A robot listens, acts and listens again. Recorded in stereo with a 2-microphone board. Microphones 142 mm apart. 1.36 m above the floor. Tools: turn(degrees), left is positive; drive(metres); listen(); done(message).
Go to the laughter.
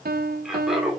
turn(degrees=-30)
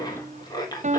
turn(degrees=25)
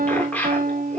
turn(degrees=10)
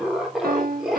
drive(metres=1.0)
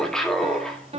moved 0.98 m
drive(metres=1.0)
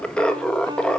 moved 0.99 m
drive(metres=1.0)
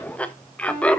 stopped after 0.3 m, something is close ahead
turn(degrees=10)
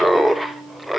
done("Arrived at the laughter, straight ahead.")